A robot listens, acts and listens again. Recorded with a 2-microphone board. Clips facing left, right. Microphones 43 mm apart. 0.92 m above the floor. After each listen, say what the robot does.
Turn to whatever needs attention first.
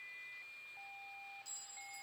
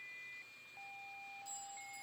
Keep listening.
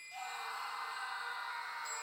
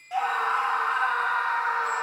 Turn 65° right.
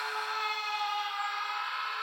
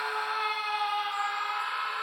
Turn 10° right.
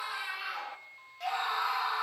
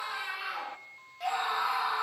Facing the scream, 1 to 2 m away.